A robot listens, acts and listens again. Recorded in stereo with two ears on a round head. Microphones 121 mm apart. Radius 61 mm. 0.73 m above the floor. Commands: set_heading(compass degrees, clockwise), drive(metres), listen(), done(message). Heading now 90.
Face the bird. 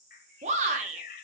set_heading(20)
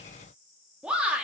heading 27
listen()
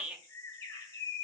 set_heading(357)
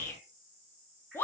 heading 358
listen()
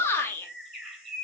done("Facing the bird.")